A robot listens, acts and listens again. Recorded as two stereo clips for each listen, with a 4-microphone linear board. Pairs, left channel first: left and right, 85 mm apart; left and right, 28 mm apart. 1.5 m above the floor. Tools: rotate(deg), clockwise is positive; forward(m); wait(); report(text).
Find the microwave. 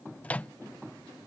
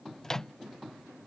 rotate(-15)
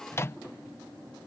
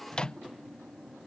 rotate(-150)
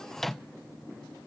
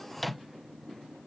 report("Facing the microwave.")